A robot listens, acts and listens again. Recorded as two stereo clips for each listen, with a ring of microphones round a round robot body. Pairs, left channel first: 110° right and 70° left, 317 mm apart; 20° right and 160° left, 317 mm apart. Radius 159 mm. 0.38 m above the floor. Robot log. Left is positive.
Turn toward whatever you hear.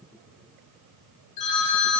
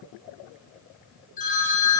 note: The phone ringing: 90° right.
cmd yaw -90
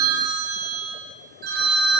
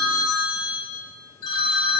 end: Facing the phone ringing, 2 to 4 m away.